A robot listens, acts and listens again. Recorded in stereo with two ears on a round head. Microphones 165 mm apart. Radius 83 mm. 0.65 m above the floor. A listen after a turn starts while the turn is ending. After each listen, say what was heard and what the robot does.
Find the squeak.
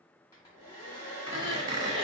The squeak: about 25° right or 155° right. Turn 25° right.
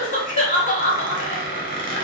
So it is at 125° right. Turn 125° right.
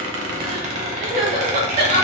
The squeak is now 40° right. Turn 40° right.
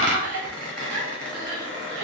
Facing the squeak.